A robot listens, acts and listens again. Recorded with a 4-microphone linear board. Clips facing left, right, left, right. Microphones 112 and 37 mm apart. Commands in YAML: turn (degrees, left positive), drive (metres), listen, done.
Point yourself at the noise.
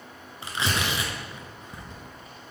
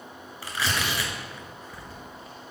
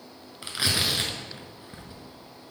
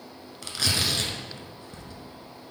turn: 20
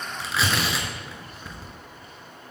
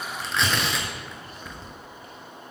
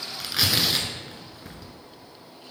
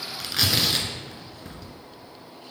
done: "Found it: tearing paper, straight ahead."